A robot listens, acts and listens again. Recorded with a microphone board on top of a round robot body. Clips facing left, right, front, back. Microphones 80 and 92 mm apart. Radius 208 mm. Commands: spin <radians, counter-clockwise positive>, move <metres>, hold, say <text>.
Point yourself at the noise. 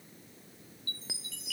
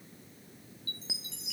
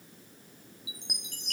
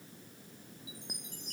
spin -0.35
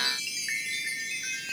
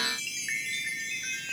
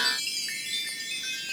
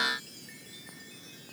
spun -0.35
say Found it: a chime, straight ahead.